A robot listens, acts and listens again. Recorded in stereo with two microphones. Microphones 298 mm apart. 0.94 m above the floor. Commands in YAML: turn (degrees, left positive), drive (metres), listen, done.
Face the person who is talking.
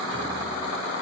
listen: true
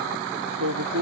turn: -90
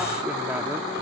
listen: true
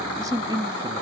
turn: -15
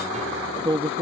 turn: -20
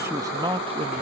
turn: -15
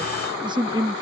turn: -15
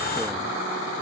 listen: true
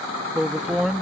done: "Found it: a man speaking, straight ahead."